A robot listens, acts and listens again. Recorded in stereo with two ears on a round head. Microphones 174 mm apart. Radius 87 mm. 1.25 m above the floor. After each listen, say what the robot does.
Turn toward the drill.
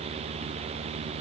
Keep listening.
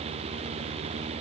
Keep listening.
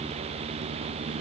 I can't make out a drill to turn to.